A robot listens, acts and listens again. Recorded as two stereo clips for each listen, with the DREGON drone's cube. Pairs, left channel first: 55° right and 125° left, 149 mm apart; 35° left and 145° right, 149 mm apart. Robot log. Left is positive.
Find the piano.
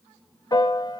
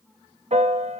note: The piano: 115° right.
cmd yaw -115
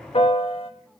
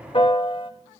note: The piano is now 15° right.
cmd yaw -15
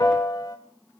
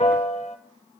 end: Facing the piano.